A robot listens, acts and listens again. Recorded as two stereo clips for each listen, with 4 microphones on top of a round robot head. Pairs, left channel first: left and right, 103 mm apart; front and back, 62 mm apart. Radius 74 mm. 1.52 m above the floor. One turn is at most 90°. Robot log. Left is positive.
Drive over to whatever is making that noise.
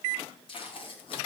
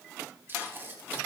note: The tape being pulled: 125° left.
cmd yaw +90
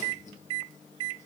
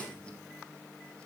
note: Nothing new. It was at 35° left.
cmd yaw +35
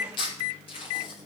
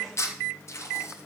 note: The tape being pulled is now 45° left.
cmd yaw +45
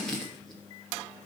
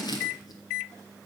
cmd fwd 1.0
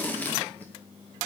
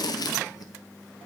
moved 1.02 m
note: The tape being pulled is now 15° left.
cmd yaw +15
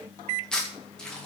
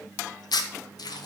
cmd fwd 1.0
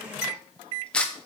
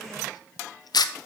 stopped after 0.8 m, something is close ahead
note: The tape being pulled is now 10° left.
cmd yaw +10
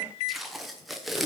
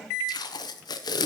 end: Arrived at the tape being pulled, straight ahead.